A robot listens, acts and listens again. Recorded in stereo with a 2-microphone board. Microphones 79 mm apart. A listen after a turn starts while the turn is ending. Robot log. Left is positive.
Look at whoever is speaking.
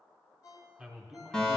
cmd yaw -30
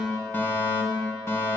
cmd idle
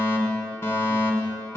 cmd idle
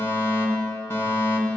end: I heard a man speaking, but can't make it out now. It was about 20° left or 140° right.